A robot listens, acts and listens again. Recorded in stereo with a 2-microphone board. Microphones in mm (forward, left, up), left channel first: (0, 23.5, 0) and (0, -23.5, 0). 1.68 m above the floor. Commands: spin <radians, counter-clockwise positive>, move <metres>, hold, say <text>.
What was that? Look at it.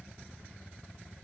hold
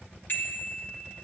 spin 0.87
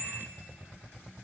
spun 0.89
spin 1.31
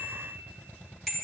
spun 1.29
say Found it: a bicycle bell, straight ahead, 2 to 4 m away.